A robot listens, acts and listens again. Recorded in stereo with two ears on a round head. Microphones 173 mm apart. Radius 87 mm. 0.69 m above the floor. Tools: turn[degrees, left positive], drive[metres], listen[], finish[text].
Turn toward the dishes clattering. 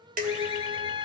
Thought: The dishes clattering: about 45° right or 135° right.
Action: turn[-45]
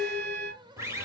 Action: finish[Facing the dishes clattering.]